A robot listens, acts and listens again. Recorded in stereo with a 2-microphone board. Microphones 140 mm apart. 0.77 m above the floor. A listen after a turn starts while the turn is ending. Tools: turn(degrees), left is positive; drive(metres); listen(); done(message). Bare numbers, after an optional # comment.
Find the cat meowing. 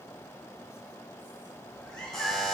turn(30)
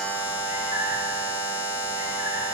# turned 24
listen()
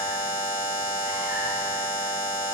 listen()
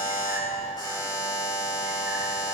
done("I heard a cat meowing, but can't make it out now. It was about 20° right or 150° left.")